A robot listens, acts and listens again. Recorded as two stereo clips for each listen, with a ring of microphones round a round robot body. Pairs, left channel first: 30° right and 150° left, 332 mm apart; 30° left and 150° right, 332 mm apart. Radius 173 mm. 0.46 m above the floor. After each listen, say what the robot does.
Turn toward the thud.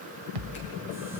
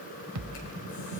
Turn 165° left.
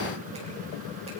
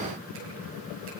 Facing where the thud came from. I can't hear it now.